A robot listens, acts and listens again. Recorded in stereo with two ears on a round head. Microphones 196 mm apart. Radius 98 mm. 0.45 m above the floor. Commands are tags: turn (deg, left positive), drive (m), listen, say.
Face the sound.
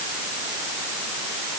<listen/>
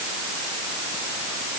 <listen/>
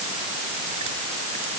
<say>I can't make out anything.</say>